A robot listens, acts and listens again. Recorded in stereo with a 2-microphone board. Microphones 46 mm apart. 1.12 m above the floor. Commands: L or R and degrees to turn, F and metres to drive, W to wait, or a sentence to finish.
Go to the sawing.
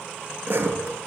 R65
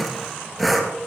F1.0
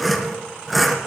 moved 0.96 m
F1.0
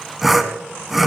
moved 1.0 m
F1.0
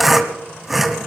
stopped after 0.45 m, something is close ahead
I am next to the sawing.